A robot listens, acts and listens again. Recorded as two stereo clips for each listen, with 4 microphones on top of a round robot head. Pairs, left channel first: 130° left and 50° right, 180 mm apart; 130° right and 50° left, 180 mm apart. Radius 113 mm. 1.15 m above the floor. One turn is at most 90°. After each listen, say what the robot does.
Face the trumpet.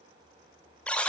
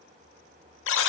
Keep listening.
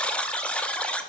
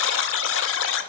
Keep listening.
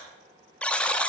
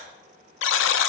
I can't make out a trumpet to turn to.